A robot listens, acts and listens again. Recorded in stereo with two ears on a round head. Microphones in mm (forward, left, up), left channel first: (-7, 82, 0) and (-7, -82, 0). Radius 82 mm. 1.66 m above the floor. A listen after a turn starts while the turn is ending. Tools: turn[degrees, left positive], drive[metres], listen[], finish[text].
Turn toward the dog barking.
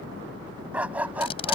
Action: turn[-30]
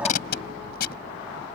Action: listen[]
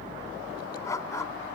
Thought: So it is at 15° left.
Action: turn[15]
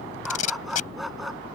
Action: finish[Found it: a dog barking, straight ahead.]